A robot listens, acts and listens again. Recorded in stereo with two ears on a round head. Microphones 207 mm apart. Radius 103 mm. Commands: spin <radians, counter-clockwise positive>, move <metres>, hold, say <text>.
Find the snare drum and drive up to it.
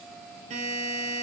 hold
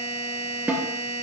spin -0.52
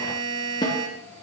spin 0.35
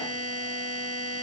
hold
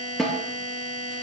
move 1.0
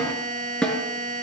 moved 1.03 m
move 1.0
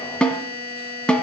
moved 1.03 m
move 1.0
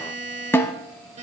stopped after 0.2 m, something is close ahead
spin 0.17
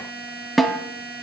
say I am next to the snare drum.